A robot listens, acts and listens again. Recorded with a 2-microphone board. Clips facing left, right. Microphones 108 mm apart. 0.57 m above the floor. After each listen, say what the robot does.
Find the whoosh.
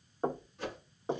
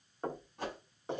Turn 65° right.
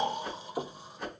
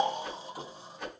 Facing the whoosh.